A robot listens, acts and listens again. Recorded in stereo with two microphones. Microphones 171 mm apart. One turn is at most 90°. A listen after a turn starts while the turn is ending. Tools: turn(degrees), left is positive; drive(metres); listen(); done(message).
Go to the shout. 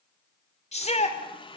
turn(degrees=45)
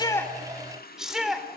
drive(metres=1.0)
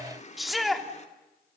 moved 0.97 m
drive(metres=1.0)
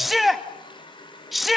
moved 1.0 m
drive(metres=1.0)
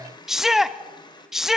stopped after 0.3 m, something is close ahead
done("Arrived at the shout, straight ahead.")